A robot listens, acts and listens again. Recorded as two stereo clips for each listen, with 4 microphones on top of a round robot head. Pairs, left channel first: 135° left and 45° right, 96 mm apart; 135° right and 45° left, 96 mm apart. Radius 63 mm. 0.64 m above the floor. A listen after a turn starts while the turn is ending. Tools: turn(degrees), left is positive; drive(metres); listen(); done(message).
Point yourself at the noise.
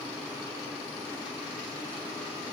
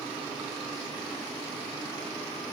listen()
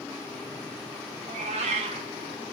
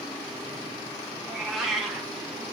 turn(degrees=-45)
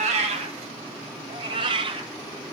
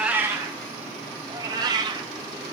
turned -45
done("Found it: a cat meowing, straight ahead, 1 to 2 m away.")